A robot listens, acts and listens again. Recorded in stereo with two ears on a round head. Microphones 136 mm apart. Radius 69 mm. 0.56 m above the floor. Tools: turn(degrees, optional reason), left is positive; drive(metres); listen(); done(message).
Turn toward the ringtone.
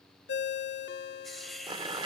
turn(degrees=90)
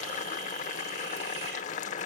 listen()
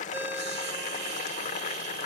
listen()
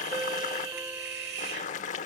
turn(degrees=-15, reason="The ringtone is now 15° right.")
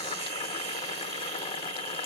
listen()
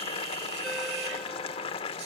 listen()
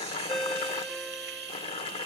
done("Found it: a ringtone, straight ahead, under 1 m away.")